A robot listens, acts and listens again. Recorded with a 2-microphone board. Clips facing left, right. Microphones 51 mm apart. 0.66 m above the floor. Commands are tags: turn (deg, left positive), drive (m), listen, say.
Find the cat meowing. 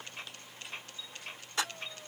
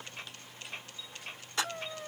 <turn deg="-90"/>
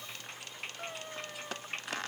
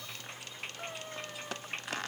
<say>Found it: a cat meowing, straight ahead.</say>